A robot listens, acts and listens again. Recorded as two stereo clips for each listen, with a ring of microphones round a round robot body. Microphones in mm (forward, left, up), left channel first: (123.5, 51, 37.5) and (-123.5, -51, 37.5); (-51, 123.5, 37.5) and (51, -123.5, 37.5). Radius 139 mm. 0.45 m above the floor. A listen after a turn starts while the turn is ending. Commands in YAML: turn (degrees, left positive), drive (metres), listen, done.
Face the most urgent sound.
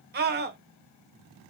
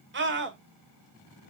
turn: -110
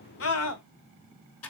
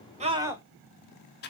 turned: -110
turn: 10
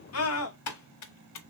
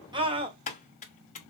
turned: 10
done: "Facing the scream, 1 to 2 m away."